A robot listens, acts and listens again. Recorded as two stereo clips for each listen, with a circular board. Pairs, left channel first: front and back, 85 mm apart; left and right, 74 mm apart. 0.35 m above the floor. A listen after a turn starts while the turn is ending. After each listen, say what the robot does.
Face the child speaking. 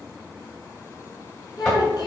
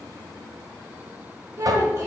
Turn 40° right.
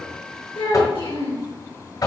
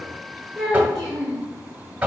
Found it: a child speaking, straight ahead.